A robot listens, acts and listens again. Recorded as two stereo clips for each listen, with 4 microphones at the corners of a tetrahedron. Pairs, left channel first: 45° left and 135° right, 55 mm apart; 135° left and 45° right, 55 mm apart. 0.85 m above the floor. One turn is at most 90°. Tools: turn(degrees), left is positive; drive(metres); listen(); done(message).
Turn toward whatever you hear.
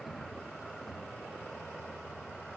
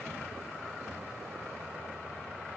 listen()
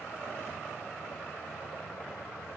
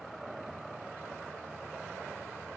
listen()
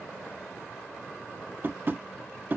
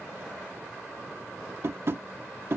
turn(degrees=-85)
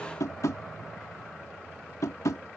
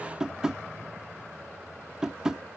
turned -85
turn(degrees=35)
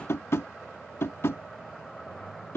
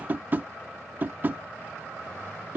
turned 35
turn(degrees=10)
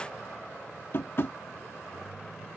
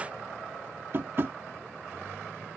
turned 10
done("Found it: tapping, straight ahead.")